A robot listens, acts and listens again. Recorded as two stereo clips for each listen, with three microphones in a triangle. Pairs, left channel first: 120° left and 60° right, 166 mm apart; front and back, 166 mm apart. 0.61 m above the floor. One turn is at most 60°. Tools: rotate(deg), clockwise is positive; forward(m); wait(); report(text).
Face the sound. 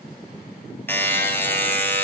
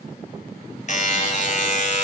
rotate(-40)
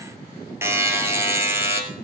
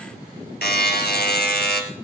rotate(-15)
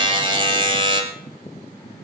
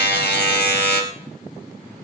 report("Facing the buzzer, 2 to 4 m away.")